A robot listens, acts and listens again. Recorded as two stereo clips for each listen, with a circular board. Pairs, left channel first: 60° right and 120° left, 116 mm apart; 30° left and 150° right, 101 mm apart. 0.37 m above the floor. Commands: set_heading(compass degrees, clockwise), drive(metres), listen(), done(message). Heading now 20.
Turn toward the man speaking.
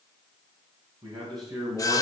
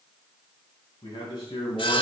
set_heading(310)
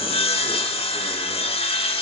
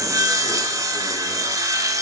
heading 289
set_heading(314)
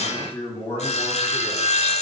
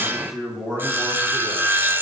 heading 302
set_heading(347)
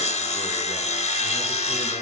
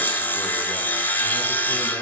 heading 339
listen()
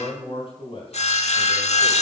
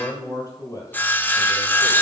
set_heading(354)
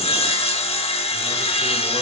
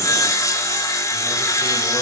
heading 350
listen()
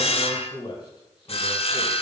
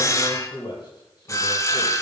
done("Found it: a man speaking, straight ahead, 2 to 4 m away.")